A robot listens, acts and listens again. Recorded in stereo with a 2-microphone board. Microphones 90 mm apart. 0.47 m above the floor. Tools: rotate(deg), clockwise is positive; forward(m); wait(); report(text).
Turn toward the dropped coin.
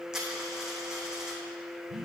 rotate(30)
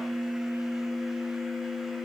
wait()
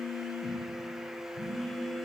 report("I heard a dropped coin, but can't make it out now. It was about 25° left or 145° right.")